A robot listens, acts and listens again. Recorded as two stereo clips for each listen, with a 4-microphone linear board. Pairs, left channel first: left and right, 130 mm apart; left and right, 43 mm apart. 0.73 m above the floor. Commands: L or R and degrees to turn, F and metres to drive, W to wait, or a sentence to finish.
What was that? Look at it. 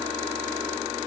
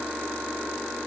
W
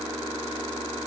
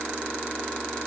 W
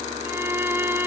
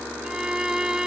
R15
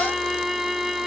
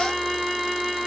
Facing the violin.